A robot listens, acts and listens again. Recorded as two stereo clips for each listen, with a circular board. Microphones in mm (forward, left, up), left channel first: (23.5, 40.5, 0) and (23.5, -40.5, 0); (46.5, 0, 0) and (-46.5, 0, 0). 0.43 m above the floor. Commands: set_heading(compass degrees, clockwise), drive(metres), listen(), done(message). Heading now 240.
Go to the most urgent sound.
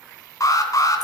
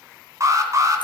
set_heading(110)
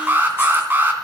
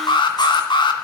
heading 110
set_heading(135)
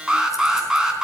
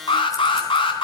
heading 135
set_heading(145)
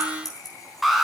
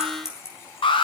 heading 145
drive(1.0)
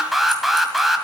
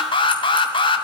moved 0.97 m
drive(1.0)
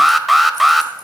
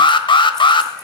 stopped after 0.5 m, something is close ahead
done("I am next to the alarm.")